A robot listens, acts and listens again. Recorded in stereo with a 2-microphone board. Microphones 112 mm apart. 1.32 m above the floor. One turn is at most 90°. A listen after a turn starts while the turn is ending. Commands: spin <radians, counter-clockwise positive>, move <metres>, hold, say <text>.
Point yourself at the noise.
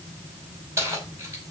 spin -0.44
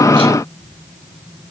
hold
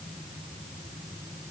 hold
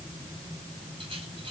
say I heard keys jangling, but can't make it out now. It was about straight ahead or 130° right.